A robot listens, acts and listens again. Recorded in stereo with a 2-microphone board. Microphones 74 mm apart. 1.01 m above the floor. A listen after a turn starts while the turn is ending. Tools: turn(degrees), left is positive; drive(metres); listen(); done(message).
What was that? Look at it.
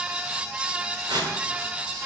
turn(degrees=-60)
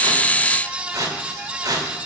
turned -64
turn(degrees=-55)
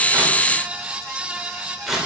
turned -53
done("Facing the tearing paper, 2 to 4 m away.")